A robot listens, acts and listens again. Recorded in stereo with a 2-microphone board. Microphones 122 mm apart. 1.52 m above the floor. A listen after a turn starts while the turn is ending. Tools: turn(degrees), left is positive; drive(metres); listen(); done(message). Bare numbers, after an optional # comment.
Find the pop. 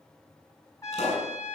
# The pop: about 60° left or 120° left.
turn(60)
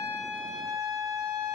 listen()
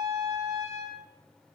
done("I heard a pop, but can't make it out now. It was about straight ahead or 60° left.")